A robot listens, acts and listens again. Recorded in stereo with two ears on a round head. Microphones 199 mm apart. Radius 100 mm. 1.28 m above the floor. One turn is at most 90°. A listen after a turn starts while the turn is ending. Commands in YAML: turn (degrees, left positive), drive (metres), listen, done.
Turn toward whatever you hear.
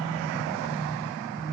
listen: true
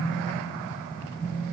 listen: true
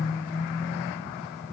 done: "I can't make out anything."